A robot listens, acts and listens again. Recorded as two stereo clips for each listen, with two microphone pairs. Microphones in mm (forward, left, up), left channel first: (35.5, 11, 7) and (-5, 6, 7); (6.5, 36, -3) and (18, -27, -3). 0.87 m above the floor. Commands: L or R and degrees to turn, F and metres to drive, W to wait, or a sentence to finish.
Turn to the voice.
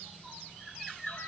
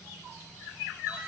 W
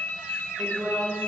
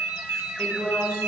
L170
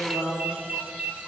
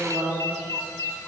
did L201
R40
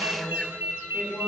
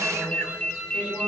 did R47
Facing the woman speaking, over 4 m away.